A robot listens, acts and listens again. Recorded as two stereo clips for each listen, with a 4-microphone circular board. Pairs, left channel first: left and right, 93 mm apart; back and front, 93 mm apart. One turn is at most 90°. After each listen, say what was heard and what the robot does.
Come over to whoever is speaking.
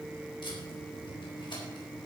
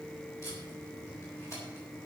Keep listening.
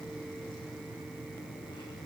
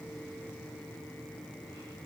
Keep listening.
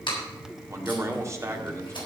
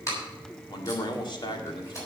The man speaking: 145° right. Turn 90° right.
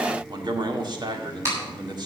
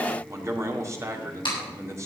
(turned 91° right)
The man speaking is now 55° right. Turn 55° right.
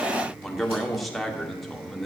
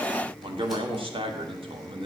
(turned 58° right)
Drive 1.0 m forward.
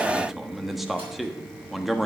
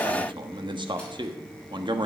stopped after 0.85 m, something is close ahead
Arrived at the man speaking, straight ahead.